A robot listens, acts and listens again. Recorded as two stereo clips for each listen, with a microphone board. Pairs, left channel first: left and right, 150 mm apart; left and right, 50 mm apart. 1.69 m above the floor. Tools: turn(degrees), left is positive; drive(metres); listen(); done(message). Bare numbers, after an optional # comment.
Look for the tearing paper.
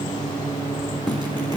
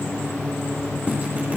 listen()
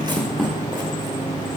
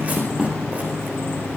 listen()
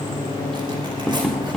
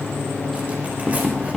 done("I can't make out tearing paper to turn to.")